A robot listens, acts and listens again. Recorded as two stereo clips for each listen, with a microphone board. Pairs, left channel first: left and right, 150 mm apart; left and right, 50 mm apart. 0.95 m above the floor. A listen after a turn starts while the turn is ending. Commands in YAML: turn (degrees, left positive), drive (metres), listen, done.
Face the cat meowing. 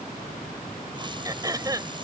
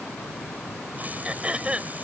listen: true
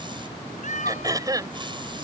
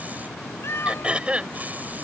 turn: 55
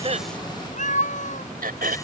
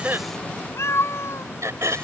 turn: 55
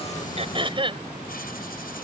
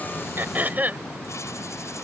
listen: true
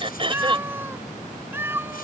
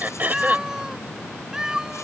turn: -15
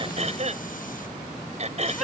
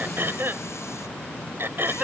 listen: true
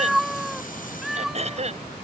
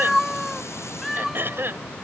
done: "Facing the cat meowing."